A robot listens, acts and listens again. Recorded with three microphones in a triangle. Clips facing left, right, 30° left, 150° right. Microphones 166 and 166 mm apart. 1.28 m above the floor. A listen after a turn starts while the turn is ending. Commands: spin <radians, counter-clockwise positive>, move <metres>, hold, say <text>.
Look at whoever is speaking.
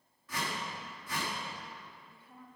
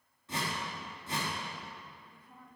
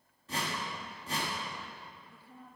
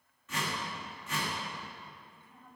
say Found it: a woman speaking, straight ahead.